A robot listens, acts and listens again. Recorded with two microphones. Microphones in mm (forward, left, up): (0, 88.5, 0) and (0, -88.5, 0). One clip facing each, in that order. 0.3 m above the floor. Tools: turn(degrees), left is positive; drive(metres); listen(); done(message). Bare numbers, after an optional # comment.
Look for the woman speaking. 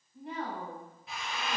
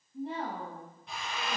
# The woman speaking: about 35° right or 145° right.
turn(-35)
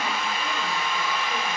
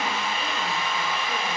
listen()
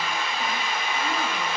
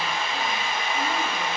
listen()
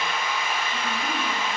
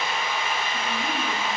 done("I heard a woman speaking, but can't make it out now. It was about straight ahead or 110° right.")